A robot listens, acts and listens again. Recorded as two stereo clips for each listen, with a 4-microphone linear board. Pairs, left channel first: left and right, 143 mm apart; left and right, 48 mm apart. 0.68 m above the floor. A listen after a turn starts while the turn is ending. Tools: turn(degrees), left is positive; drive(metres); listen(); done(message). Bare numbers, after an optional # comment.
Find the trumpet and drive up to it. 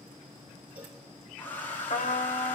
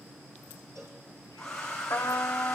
# The trumpet: about 65° left or 115° left.
turn(65)
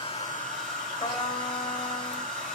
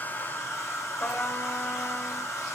# So it is at 50° left.
turn(50)
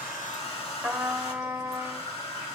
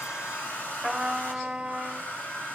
# The trumpet is now 10° right.
turn(-10)
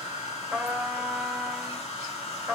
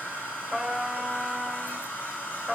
drive(1.0)
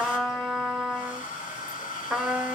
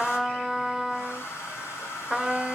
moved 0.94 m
drive(1.0)
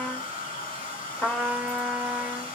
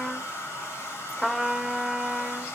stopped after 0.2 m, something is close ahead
done("I am next to the trumpet.")